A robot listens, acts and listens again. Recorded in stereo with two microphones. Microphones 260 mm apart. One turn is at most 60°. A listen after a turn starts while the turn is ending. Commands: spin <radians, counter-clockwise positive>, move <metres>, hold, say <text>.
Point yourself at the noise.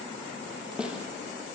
spin -0.52
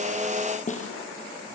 spin 0.52
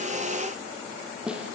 say Found it: a snare drum, straight ahead.